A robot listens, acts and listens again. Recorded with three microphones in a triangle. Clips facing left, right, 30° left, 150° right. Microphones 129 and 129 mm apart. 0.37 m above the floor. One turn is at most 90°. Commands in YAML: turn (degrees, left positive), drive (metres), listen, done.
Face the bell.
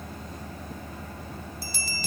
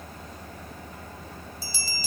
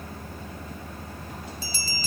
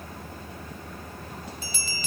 turn: 80
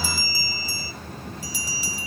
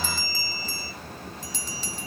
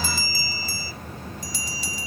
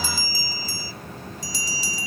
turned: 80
turn: 10
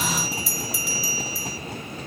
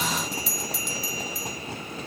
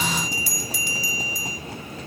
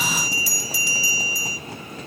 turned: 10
done: "Found it: a bell, straight ahead."